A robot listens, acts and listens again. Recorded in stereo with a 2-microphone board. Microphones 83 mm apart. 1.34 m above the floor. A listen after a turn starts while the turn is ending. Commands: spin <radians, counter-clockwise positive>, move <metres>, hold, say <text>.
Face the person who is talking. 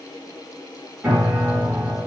hold
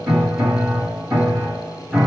hold
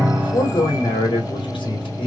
spin 1.57
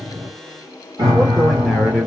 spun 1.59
say Found it: a man speaking, straight ahead, 1 to 2 m away.